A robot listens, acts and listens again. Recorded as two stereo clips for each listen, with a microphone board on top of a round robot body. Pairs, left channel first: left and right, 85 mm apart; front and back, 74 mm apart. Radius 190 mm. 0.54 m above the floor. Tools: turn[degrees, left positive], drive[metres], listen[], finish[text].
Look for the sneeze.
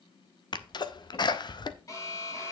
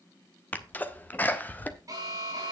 Thought: The sneeze: 65° left.
Action: turn[65]
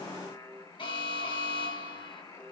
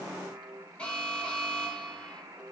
Action: finish[Facing where the sneeze came from. I can't hear it now.]